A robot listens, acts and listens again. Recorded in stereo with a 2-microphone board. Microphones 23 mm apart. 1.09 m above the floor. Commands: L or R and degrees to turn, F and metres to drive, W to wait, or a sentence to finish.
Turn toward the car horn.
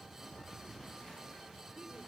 W
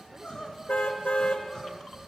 L60
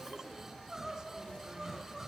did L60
W
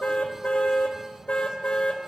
L60
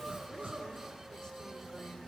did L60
W
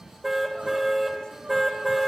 R10
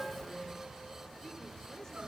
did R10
W
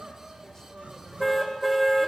Found it: a car horn, straight ahead.